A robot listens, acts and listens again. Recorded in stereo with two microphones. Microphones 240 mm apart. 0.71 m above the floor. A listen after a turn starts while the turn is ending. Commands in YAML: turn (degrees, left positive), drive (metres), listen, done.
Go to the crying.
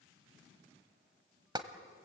listen: true
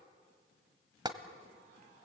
listen: true
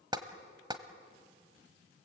done: "I can't make out crying to turn to."